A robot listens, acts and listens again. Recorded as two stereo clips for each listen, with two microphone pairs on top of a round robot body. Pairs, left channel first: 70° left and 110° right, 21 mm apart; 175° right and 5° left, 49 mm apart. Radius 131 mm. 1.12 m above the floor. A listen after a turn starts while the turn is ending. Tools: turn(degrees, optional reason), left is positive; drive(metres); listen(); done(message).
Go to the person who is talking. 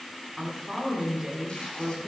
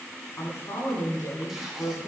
turn(degrees=175, reason="The woman speaking: 175° left.")
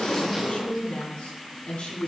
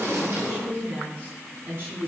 turn(degrees=50, reason="The woman speaking is now 50° left.")
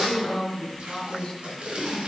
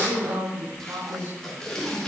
drive(metres=1.0)
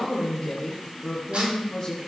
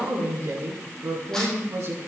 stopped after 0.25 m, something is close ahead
done("Blocked. The woman speaking is further on, straight ahead.")